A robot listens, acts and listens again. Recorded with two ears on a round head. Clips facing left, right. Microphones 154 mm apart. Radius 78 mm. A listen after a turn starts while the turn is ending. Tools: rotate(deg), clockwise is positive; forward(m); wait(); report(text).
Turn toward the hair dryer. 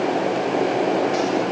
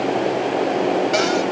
wait()
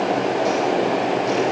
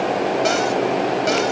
wait()
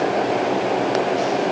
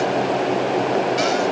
report("I can't make out a hair dryer.")